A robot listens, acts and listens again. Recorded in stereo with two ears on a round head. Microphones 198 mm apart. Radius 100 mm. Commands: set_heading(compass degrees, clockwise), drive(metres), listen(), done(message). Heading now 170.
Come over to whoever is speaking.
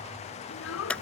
set_heading(115)
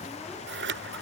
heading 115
listen()
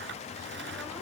listen()
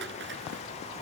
done("I heard a child speaking, but can't make it out now. It was about straight ahead or 70° left. I did not reach it.")